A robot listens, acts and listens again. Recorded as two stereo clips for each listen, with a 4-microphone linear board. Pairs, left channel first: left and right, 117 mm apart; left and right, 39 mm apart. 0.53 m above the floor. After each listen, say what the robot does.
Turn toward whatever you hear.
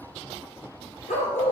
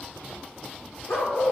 Turn 90° left.
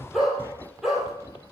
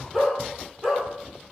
Found it: a dog barking, straight ahead, over 4 m away.